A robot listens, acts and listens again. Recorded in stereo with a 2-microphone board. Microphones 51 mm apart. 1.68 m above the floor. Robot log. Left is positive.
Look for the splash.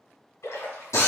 note: The splash: about 70° left or 110° left.
cmd yaw +70
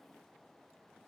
cmd idle
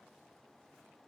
end: I heard a splash, but can't make it out now. It was about straight ahead or 40° left.